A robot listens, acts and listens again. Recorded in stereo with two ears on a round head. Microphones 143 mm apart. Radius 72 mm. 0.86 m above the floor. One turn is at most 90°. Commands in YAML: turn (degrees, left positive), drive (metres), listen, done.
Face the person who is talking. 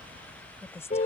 turn: 20
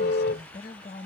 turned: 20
turn: 90
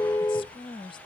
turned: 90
turn: 30
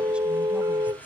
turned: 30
listen: true
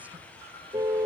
listen: true
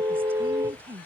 turn: -15
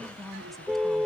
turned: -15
done: "Facing the woman speaking."